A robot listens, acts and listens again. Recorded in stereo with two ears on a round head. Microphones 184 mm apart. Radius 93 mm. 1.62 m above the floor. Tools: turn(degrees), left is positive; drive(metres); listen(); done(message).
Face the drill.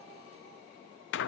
listen()
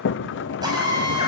turn(degrees=-20)
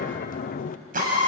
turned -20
turn(degrees=-135)
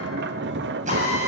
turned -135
turn(degrees=-35)
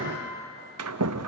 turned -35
listen()
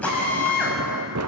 done("Found it: a drill, straight ahead, over 4 m away.")